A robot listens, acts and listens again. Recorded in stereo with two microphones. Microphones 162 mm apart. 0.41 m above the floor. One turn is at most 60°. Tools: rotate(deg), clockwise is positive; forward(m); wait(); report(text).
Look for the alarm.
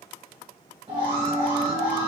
rotate(35)
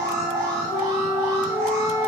rotate(60)
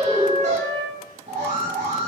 rotate(55)
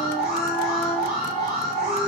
report("Facing the alarm.")